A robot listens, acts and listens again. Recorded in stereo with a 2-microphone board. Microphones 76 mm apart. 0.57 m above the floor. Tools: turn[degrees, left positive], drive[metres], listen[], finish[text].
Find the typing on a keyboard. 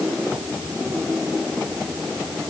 Action: listen[]
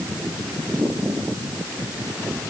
Action: listen[]
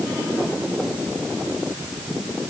Action: finish[I can't make out typing on a keyboard.]